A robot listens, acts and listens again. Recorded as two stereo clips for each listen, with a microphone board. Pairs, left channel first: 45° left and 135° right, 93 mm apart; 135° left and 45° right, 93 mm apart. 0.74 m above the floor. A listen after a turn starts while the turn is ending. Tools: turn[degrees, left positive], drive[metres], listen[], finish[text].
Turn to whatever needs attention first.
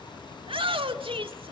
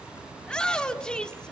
Thought: The shout: 145° right.
Action: turn[-145]
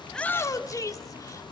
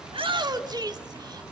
Action: finish[Found it: a shout, straight ahead, 1 to 2 m away.]